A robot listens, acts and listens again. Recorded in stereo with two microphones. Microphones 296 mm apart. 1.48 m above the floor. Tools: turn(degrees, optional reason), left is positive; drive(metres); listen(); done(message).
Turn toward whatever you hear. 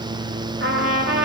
turn(degrees=-45, reason="The trumpet: about 45° right or 135° right.")
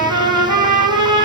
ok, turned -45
turn(degrees=-90, reason="So it is at 90° right.")
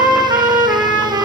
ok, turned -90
turn(degrees=-10, reason="The trumpet is now 10° right.")
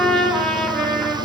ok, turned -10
done("Found it: a trumpet, straight ahead, 2 to 4 m away.")